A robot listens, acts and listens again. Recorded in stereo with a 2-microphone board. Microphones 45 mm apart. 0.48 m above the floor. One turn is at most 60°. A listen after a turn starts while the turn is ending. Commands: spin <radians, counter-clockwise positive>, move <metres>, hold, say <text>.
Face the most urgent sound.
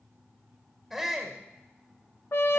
spin -0.52
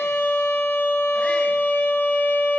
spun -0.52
hold
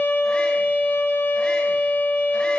hold
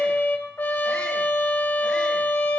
say I heard a shout, but can't make it out now. It was about 25° left or 145° right.